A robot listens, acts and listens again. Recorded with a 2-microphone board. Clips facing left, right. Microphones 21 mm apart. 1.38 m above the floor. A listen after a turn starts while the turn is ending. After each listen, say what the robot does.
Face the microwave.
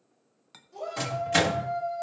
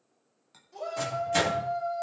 Turn 45° left.
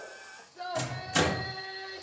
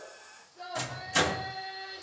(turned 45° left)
Found it: a microwave, straight ahead, 2 to 4 m away.